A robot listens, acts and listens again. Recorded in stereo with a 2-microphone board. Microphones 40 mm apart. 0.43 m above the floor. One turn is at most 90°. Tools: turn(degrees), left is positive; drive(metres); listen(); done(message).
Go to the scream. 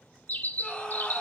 turn(degrees=25)
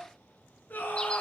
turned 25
turn(degrees=90)
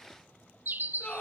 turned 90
turn(degrees=40)
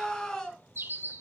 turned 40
turn(degrees=15)
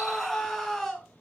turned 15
drive(metres=1.0)
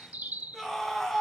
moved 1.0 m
drive(metres=1.0)
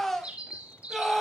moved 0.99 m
drive(metres=1.0)
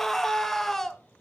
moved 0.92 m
turn(degrees=10)
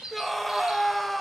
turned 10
drive(metres=1.0)
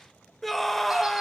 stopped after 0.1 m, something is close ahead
done("I am next to the scream.")